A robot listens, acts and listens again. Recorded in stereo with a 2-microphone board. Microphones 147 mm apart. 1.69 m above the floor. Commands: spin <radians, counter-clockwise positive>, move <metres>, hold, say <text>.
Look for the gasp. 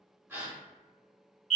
spin -0.52
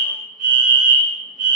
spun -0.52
hold
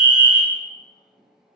say I heard a gasp, but can't make it out now. It was about 15° left or 135° right.